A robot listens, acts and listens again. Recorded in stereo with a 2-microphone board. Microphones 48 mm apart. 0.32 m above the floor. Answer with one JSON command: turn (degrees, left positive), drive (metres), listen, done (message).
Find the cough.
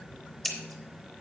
{"listen": true}
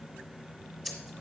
{"listen": true}
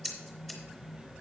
{"done": "I can't make out a cough to turn to."}